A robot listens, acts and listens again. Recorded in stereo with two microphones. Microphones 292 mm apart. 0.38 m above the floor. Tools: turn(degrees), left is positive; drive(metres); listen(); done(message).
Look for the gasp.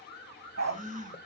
turn(degrees=-30)
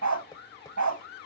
listen()
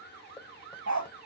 done("I heard a gasp, but can't make it out now. It was about straight ahead or 120° right.")